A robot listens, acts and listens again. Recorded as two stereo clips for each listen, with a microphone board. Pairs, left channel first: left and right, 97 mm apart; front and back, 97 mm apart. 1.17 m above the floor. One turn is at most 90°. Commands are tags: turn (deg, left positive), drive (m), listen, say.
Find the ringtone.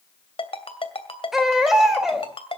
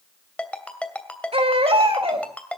<turn deg="75"/>
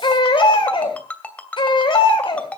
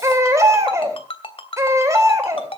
<turn deg="15"/>
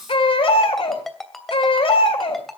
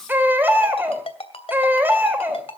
<say>Facing the ringtone, 2 to 4 m away.</say>